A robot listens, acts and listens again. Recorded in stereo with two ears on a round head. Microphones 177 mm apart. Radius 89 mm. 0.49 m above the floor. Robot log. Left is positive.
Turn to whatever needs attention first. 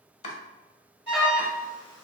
note: The alarm: about 25° left or 155° left.
cmd yaw +25
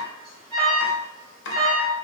end: Found it: an alarm, straight ahead, 1 to 2 m away.